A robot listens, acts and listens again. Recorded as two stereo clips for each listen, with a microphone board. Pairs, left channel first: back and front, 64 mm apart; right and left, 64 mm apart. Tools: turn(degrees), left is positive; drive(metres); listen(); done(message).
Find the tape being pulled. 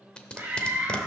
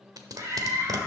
turn(degrees=110)
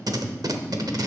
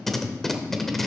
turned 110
done("Found it: tape being pulled, straight ahead.")